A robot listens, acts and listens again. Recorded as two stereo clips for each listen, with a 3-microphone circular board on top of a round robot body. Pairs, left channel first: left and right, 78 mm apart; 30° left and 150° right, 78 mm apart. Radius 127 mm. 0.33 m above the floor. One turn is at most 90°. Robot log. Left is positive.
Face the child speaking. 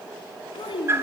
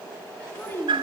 note: The child speaking: 95° left.
cmd yaw +90
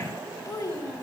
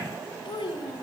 note: The child speaking is now 45° left.
cmd yaw +45
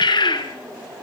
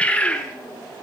cmd idle
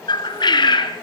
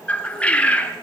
cmd idle
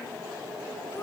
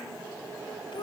note: The child speaking is now 40° left.
cmd yaw +40
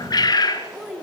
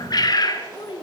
end: Found it: a child speaking, straight ahead.